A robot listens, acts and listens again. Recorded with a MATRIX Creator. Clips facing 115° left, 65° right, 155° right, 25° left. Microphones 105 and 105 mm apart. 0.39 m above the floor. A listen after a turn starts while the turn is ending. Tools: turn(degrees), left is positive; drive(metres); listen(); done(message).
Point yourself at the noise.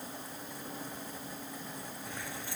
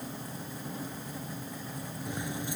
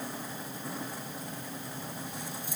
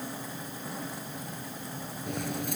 done("Found it: keys jangling, straight ahead.")